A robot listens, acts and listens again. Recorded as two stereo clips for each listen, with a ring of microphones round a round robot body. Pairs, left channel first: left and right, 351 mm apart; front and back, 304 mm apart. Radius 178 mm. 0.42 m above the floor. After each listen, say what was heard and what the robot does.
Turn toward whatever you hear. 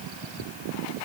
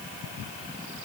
Keep listening.
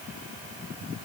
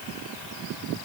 Keep listening.
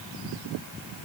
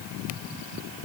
I can't make out anything to turn to.